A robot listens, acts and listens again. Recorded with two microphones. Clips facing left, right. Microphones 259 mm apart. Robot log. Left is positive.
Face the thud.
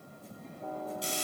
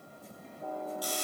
cmd idle
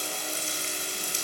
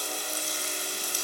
cmd idle
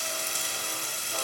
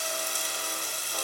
end: I can't make out a thud, only frying.